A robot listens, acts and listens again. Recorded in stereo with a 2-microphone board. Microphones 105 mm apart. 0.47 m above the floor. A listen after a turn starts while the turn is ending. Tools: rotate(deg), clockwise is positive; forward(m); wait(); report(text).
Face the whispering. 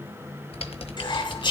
rotate(-50)
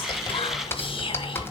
wait()
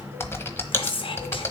rotate(-75)
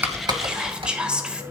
rotate(10)
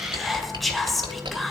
report("Facing the whispering, 1 to 2 m away.")